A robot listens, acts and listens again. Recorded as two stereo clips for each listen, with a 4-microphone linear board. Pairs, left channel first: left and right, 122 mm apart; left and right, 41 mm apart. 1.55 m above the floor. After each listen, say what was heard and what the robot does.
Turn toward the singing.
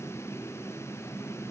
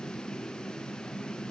Keep listening.
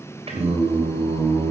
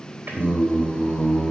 The singing: about 45° right or 135° right. Turn 45° right.
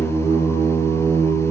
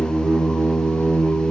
So it is at 85° right. Turn 85° right.
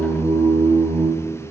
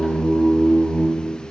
The singing is now 35° right. Turn 35° right.
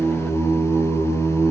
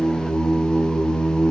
Found it: singing, straight ahead, over 4 m away.